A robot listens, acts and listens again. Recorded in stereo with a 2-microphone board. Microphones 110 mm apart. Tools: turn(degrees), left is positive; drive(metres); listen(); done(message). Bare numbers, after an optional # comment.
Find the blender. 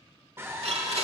# The blender: about 65° right or 115° right.
turn(-65)
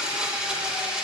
# So it is at 10° right.
turn(-10)
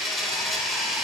done("Found it: a blender, straight ahead, 1 to 2 m away.")